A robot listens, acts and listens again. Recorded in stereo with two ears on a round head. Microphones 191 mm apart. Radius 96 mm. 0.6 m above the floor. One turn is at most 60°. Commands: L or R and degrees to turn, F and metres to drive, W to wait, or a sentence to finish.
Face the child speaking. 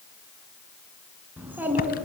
R30
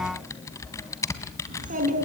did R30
R60
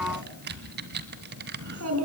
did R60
R60
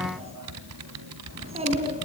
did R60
R30
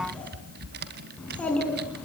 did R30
Found it: a child speaking, straight ahead.